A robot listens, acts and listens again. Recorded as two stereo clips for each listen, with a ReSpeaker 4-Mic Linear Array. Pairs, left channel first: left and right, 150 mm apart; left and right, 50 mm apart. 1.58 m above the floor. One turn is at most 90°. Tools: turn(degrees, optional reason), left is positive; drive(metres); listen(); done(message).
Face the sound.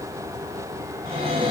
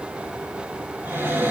turn(degrees=-45, reason="The cupboard door: about 45° right or 135° right.")
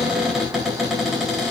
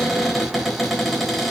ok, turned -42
done("Found it: a cupboard door, straight ahead.")